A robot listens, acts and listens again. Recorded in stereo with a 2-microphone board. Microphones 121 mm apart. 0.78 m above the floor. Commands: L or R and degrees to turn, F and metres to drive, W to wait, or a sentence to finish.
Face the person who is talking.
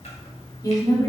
L30
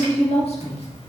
L120
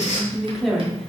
Facing the woman speaking.